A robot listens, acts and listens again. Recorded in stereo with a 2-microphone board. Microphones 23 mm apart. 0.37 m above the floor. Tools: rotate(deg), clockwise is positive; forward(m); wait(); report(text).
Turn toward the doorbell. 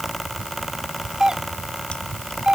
rotate(35)
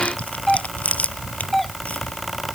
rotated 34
report("Found it: a doorbell, straight ahead.")